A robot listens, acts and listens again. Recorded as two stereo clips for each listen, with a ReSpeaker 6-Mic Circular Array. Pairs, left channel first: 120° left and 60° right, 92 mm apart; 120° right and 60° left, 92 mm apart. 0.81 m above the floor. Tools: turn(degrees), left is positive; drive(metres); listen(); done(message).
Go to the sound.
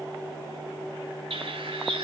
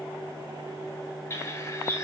turn(degrees=-60)
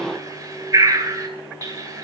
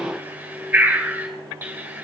drive(metres=1.0)
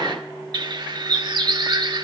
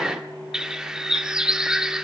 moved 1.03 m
turn(degrees=-20)
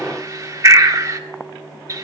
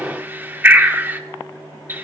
drive(metres=1.0)
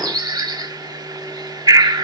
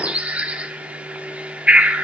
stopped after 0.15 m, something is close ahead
turn(degrees=-15)
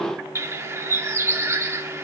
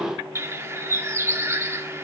done("I am next to the bird.")